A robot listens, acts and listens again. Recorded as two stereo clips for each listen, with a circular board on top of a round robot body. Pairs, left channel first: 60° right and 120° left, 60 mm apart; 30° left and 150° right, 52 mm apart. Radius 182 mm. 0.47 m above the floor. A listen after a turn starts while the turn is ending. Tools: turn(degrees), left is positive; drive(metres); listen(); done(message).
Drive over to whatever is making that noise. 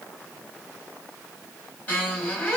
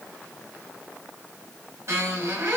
turn(degrees=-120)
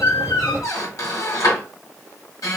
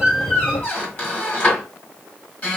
turn(degrees=-30)
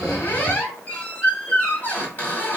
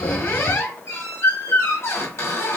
drive(metres=1.0)
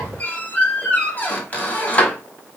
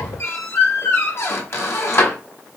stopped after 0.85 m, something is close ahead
done("Arrived at the squeak, straight ahead.")